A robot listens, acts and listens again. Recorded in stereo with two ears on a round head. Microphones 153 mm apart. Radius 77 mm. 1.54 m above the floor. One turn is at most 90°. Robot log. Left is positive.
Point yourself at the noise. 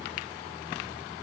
cmd idle
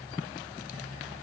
cmd idle
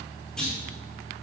cmd yaw +30
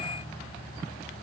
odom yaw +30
cmd idle
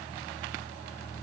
end: I heard a clunk, but can't make it out now. It was about 25° right or 145° left.